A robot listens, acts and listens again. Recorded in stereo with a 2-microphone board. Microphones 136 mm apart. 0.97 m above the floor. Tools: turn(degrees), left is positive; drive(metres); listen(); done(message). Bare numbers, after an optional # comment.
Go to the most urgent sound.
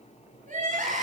# The crying: about 70° right or 110° right.
turn(-70)
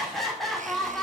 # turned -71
drive(1.0)
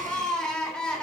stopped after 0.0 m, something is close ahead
done("Blocked. The crying is further on, straight ahead.")